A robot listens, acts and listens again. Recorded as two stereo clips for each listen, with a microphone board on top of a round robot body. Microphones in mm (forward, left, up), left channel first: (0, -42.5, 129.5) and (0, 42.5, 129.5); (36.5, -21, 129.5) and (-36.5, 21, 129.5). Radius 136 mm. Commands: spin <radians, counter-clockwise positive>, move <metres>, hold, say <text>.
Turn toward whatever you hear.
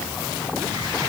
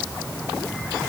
hold
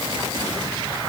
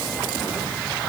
hold
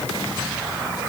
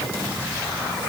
say I can't make out anything.